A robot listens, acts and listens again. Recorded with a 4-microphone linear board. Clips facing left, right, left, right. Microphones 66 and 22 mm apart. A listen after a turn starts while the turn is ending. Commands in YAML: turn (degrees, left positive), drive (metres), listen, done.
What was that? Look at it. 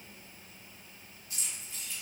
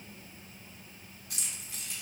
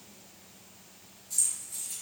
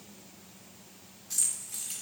turn: -70
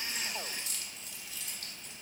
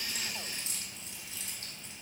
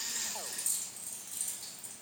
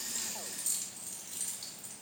turn: -30
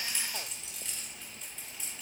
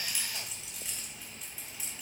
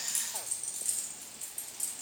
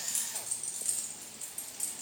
done: "Found it: keys jangling, straight ahead, under 1 m away."